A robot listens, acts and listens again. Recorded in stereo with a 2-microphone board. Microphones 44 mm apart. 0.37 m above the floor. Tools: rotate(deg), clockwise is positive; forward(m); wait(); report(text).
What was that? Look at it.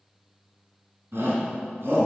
rotate(65)
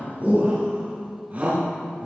rotate(40)
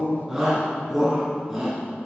report("Found it: a shout, straight ahead, 2 to 4 m away.")